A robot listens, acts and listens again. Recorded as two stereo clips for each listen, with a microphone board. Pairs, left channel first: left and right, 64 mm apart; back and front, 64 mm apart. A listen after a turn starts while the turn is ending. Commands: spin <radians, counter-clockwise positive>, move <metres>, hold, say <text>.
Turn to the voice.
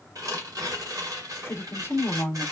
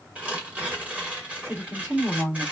spin 0.87
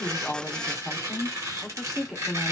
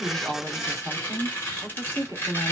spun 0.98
say Found it: a woman speaking, straight ahead, 1 to 2 m away.